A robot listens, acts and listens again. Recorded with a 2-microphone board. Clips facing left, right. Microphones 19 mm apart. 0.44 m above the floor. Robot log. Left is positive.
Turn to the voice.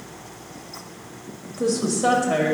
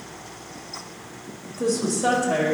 note: The woman speaking: about 35° left or 145° left.
cmd yaw +35
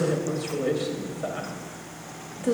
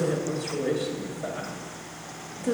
note: So it is at 105° left.
cmd yaw +105
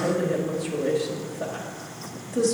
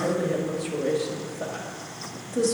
end: Facing the woman speaking, 1 to 2 m away.